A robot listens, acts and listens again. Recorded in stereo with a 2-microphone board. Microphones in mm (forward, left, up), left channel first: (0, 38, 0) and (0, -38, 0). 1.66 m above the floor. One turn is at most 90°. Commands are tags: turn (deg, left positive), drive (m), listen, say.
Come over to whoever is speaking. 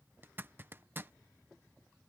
<listen/>
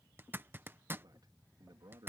<turn deg="-70"/>
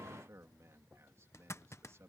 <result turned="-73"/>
<turn deg="-40"/>
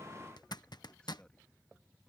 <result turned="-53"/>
<turn deg="15"/>
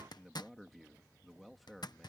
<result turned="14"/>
<drive m="1.0"/>
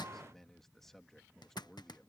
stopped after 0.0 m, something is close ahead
<say>Something is in my way. I am facing the man speaking but have not reached it.</say>